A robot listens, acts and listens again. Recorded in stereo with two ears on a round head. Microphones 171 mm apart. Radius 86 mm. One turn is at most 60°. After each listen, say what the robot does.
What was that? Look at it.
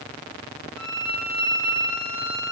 Turn 60° left.
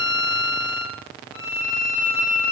Turn 45° left.
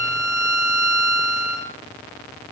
Found it: a violin, straight ahead, over 4 m away.